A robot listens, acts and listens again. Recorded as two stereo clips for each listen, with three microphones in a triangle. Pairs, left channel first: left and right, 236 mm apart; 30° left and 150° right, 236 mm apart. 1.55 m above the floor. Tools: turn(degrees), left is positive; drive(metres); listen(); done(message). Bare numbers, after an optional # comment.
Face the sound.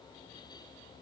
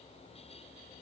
listen()
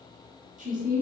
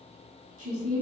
# The woman speaking: 140° right.
turn(-140)
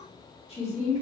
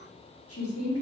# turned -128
# The woman speaking is now 35° left.
turn(35)
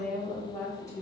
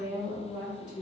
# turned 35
# The woman speaking is now 15° left.
turn(15)
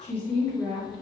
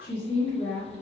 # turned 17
done("Found it: a woman speaking, straight ahead.")